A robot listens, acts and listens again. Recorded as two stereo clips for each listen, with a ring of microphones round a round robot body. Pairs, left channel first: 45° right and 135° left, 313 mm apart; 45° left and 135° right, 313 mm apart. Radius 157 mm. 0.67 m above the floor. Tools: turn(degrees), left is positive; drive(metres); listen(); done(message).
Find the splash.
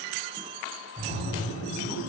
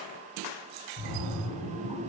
turn(degrees=25)
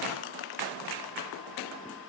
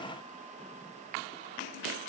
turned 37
turn(degrees=-10)
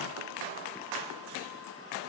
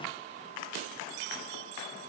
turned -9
done("I heard a splash from this way, but can't make it out now.")